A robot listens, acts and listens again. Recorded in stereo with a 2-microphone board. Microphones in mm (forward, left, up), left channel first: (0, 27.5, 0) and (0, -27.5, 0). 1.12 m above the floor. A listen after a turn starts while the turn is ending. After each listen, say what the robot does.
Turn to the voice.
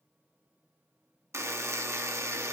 Keep listening.
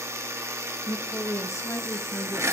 Turn 65° left.
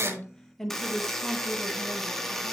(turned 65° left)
Found it: a woman speaking, straight ahead.